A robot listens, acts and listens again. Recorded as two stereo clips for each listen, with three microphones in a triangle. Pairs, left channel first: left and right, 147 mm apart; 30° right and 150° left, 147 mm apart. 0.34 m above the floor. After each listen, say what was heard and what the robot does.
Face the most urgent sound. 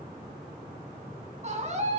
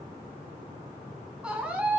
The scream: 125° right. Turn 125° right.
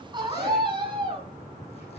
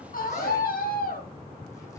The scream is now 30° right. Turn 30° right.
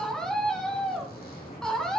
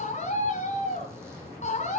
Facing the scream, 2 to 4 m away.